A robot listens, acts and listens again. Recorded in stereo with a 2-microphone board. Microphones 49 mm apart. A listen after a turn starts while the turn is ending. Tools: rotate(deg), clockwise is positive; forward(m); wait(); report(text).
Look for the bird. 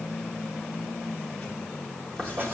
wait()
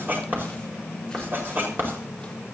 wait()
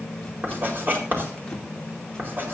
report("I can't make out a bird to turn to.")